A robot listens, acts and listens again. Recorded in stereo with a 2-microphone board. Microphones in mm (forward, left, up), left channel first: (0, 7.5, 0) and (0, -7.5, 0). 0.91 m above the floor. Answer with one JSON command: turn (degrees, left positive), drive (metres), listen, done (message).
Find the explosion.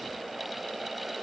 {"listen": true}
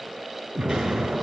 {"turn": -65}
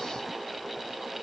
{"listen": true}
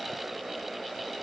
{"done": "I heard an explosion, but can't make it out now. It was about straight ahead or 50° right."}